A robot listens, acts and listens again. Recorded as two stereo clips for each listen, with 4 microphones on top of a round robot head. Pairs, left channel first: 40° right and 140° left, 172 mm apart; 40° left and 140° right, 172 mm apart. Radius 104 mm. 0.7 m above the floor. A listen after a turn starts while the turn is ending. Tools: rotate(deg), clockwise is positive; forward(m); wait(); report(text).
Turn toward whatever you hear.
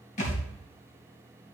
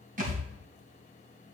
rotate(95)
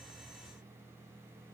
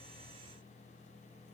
report("I heard a thud from this way, but can't make it out now.")